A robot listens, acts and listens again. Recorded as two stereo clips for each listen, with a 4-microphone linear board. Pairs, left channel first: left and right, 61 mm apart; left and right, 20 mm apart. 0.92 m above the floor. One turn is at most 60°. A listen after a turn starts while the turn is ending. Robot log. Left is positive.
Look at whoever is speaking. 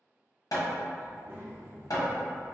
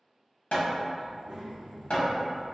note: The child speaking: about 40° right or 140° right.
cmd yaw -40
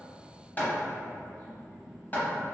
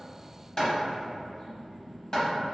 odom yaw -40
end: Found it: a child speaking, straight ahead, 1 to 2 m away.